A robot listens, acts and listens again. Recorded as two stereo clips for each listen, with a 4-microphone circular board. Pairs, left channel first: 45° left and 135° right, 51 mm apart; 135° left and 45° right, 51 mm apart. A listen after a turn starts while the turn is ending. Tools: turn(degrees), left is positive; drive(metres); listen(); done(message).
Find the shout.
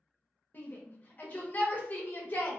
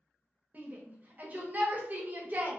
done("Facing the shout, under 1 m away.")